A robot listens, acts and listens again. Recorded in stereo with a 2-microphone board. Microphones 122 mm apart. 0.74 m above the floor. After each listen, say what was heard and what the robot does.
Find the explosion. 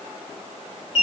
Keep listening.
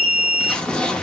Turn 30° left.
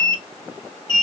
Keep listening.
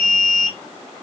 I heard an explosion, but can't make it out now. It was about 25° right or 145° left.